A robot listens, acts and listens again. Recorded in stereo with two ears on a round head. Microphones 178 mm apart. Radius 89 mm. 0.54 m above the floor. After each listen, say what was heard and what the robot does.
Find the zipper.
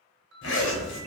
The zipper: about 70° left or 110° left. Turn 70° left.
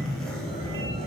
Found it: a zipper, straight ahead, 1 to 2 m away.